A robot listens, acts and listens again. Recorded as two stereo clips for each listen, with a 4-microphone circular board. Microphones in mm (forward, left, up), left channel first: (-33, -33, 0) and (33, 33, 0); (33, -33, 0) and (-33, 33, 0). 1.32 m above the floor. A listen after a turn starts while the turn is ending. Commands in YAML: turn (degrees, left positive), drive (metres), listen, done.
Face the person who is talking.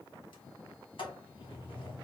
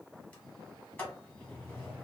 listen: true
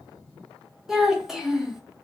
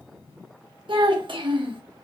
turn: 130
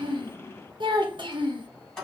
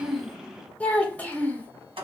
turn: 25
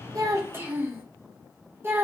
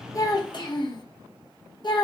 turn: -20
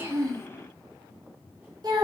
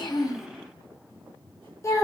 turn: 10
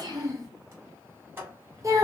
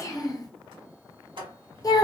done: "Facing the child speaking."